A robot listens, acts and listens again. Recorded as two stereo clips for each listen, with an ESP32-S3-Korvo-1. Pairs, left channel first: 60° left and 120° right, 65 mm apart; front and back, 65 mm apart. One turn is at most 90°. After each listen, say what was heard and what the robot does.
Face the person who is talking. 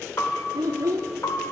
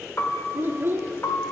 The child speaking: 130° right. Turn 90° right.
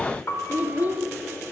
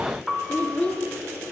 The child speaking is now 70° right. Turn 70° right.
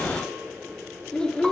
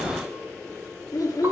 The child speaking is now 15° right. Turn 15° right.
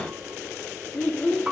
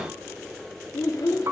Found it: a child speaking, straight ahead.